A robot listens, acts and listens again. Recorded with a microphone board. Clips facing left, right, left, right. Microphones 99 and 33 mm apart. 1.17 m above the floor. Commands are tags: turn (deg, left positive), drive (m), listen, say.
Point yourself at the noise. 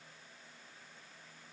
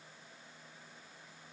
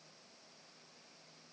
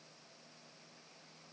<listen/>
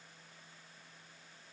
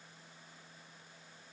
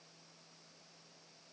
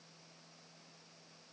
<listen/>
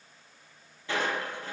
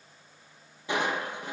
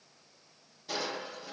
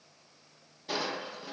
<turn deg="-15"/>
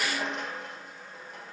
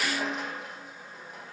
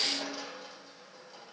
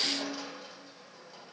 <say>Found it: crushing, straight ahead.</say>